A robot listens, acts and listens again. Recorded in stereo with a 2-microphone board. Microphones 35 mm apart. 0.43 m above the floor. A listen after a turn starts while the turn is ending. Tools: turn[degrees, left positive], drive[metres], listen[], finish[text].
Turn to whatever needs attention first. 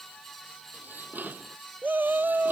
Thought: The shout: about 65° right or 115° right.
Action: turn[-65]
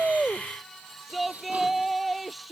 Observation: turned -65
Action: finish[Facing the shout.]